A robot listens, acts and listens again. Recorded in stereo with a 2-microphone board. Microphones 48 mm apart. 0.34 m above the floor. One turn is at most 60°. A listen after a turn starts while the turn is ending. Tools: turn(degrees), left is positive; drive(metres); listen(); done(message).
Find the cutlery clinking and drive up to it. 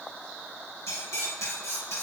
turn(degrees=60)
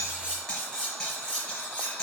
turn(degrees=15)
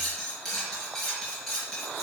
drive(metres=1.0)
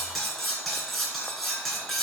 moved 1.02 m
drive(metres=1.0)
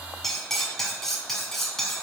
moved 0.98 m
drive(metres=1.0)
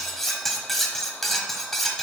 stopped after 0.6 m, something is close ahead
done("I am next to the cutlery clinking.")